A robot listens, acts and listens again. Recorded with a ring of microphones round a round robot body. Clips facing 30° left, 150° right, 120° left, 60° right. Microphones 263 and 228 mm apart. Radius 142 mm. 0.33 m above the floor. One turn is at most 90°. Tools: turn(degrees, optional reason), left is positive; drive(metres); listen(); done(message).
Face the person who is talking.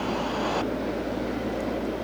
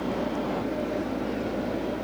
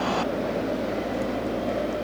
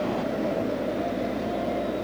listen()
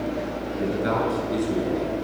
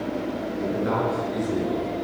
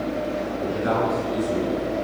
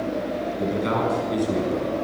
turn(degrees=-30, reason="The man speaking: 30° right.")
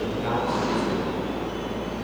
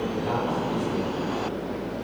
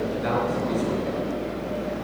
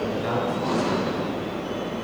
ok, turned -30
done("Facing the man speaking.")